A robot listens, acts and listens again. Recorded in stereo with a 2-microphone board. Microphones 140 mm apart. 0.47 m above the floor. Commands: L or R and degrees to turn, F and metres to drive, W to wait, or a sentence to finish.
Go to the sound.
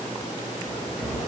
R30
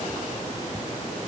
W
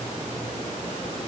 W
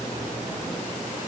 I heard a cupboard door, but can't make it out now. It was about 20° left or 140° right. I did not reach it.